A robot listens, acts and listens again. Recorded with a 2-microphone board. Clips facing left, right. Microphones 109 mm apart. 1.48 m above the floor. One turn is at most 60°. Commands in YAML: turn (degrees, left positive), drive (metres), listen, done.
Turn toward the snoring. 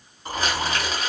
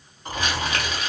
turn: 30
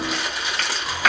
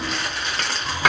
turn: -25
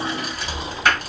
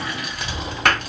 done: "Found it: snoring, straight ahead."